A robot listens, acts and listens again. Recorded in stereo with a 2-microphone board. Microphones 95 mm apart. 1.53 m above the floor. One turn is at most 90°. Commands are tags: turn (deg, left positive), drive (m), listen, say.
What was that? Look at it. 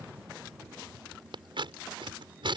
<turn deg="-65"/>
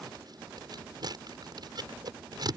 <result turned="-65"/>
<turn deg="-50"/>
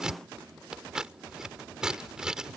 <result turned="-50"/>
<turn deg="-10"/>
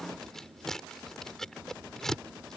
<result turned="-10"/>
<say>Found it: scissors, straight ahead.</say>